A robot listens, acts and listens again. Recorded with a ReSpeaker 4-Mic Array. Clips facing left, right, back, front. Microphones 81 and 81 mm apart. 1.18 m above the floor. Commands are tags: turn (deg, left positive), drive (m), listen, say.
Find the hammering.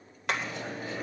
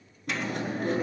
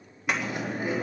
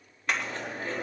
<turn deg="95"/>
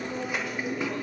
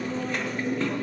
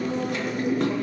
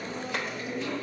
<listen/>
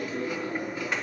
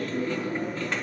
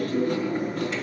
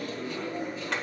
<listen/>
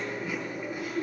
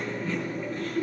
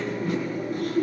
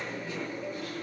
<say>Facing where the hammering came from. I can't hear it now.</say>